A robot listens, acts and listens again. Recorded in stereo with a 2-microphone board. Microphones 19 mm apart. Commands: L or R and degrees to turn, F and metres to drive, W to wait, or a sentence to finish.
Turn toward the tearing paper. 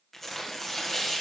L30
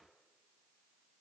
W
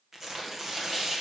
R20
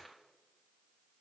W
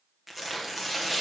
Found it: tearing paper, straight ahead, 1 to 2 m away.